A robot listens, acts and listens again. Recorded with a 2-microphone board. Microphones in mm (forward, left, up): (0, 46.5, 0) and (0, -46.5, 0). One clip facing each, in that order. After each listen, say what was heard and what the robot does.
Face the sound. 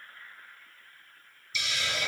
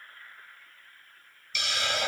The hiss: about 60° right or 120° right. Turn 60° right.
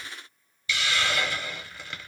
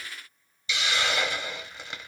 So it is at 20° right. Turn 20° right.
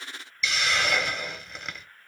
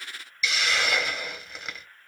Found it: a hiss, straight ahead, 1 to 2 m away.